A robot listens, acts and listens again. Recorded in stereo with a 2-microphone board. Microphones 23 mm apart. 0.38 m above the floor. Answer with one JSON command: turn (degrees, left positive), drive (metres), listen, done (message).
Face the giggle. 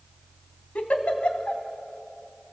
{"turn": 65}
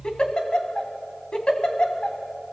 {"turn": 40}
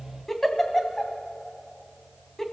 {"done": "Facing the giggle."}